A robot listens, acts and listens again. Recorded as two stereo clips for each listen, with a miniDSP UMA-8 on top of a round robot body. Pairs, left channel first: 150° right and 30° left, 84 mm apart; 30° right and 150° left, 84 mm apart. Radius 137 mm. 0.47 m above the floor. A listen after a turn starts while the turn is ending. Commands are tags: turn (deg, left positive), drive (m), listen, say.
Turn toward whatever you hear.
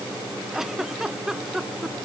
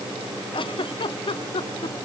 <turn deg="-55"/>
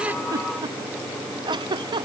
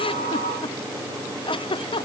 <say>Facing the giggle.</say>